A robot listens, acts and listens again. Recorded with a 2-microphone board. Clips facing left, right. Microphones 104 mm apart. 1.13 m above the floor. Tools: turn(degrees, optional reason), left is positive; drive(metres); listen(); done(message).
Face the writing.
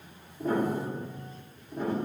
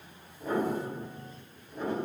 listen()
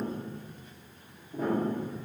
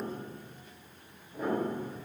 listen()
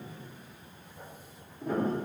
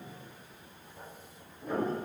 turn(degrees=-90)
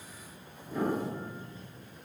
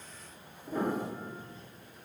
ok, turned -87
listen()
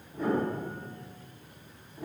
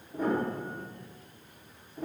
listen()
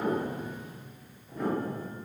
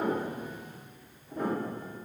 done("I heard writing from this way, but can't make it out now.")